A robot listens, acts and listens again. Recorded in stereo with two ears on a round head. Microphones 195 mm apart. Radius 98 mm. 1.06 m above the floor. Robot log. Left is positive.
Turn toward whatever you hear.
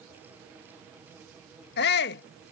note: The shout: about 50° left or 130° left.
cmd yaw +50
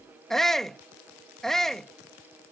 end: Facing the shout.